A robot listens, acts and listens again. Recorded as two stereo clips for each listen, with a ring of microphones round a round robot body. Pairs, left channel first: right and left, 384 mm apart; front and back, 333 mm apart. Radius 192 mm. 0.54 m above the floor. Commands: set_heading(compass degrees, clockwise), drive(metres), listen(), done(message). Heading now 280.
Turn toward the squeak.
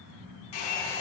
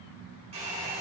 listen()
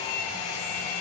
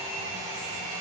listen()
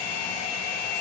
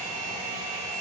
done("I can't make out a squeak to turn to.")